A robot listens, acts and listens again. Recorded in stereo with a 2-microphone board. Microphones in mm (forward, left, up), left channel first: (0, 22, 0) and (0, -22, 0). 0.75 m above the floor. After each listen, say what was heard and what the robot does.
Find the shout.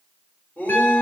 The shout: about 55° left or 125° left. Turn 55° left.
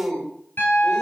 So it is at 10° left. Turn 10° left.
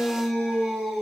Facing the shout.